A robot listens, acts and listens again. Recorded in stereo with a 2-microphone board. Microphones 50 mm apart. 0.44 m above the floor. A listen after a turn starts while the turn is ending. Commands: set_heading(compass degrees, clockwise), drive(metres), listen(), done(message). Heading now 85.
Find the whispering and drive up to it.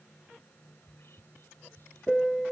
set_heading(35)
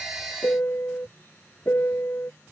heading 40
listen()
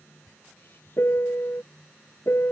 set_heading(340)
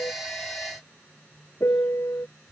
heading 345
drive(1.0)
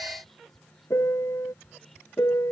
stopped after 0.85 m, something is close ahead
set_heading(335)
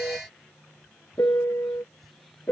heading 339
listen()
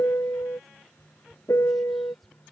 done("I am next to the whispering.")